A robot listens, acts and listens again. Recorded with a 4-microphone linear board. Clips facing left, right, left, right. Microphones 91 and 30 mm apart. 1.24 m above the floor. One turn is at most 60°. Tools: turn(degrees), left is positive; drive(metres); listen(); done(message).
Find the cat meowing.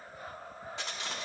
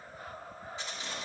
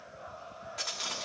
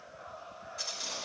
listen()
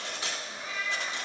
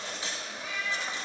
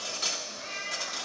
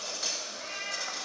turn(degrees=30)
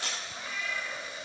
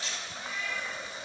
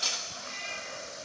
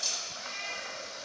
done("Facing the cat meowing, over 4 m away.")